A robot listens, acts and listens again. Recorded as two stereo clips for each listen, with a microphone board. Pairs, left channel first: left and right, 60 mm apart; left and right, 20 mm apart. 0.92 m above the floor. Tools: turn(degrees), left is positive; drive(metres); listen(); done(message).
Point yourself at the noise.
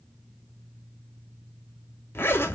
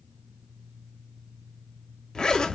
turn(degrees=40)
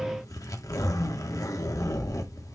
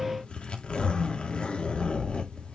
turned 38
turn(degrees=100)
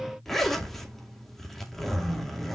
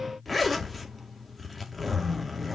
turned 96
done("Found it: a zipper, straight ahead, 2 to 4 m away.")